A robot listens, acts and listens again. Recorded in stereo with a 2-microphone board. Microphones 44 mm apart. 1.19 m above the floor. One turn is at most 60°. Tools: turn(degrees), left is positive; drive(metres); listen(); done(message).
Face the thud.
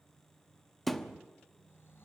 turn(degrees=30)
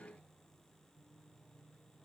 listen()
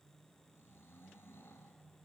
done("I heard a thud, but can't make it out now. It was about 25° right or 145° left.")